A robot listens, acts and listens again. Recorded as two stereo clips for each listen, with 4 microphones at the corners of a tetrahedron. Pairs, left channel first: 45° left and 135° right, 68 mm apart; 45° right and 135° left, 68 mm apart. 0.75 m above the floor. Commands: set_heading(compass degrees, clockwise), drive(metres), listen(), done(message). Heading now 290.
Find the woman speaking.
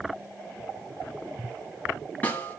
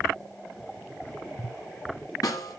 listen()
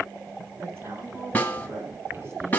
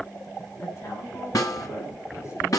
set_heading(15)
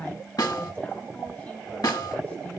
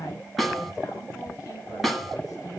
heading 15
set_heading(35)
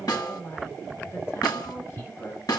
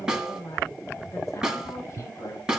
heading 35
done("Facing the woman speaking.")